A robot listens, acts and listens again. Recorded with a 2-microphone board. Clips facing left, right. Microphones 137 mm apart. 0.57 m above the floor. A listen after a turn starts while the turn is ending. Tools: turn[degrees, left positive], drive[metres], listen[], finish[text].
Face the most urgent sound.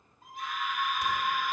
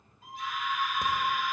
Thought: The scream: about 50° left or 130° left.
Action: turn[50]
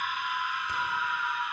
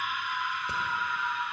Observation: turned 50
Thought: So it is at 15° left.
Action: turn[15]
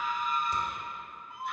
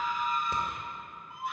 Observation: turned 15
Action: finish[Facing the scream.]